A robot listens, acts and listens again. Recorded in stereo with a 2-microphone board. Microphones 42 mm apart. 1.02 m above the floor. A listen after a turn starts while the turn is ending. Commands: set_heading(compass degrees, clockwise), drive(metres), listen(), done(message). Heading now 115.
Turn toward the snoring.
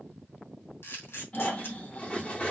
set_heading(75)
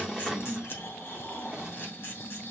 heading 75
set_heading(340)
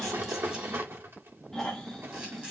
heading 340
set_heading(330)
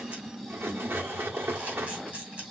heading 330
done("Facing the snoring.")